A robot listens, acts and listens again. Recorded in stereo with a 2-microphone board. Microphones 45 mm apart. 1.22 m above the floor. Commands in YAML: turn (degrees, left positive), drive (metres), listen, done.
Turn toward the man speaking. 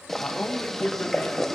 turn: 60
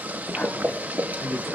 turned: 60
turn: 60
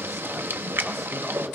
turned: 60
listen: true
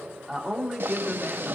done: "Facing the man speaking, 2 to 4 m away."